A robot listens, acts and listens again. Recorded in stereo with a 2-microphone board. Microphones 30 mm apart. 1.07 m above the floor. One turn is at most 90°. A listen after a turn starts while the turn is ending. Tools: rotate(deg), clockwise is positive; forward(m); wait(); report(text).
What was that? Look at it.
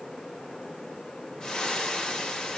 rotate(-25)
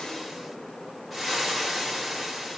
report("Facing the frying, 1 to 2 m away.")